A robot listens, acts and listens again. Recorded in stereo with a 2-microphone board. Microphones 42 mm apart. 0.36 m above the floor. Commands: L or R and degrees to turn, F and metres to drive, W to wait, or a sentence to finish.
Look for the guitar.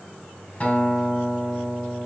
L30
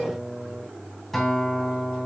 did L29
Found it: a guitar, straight ahead.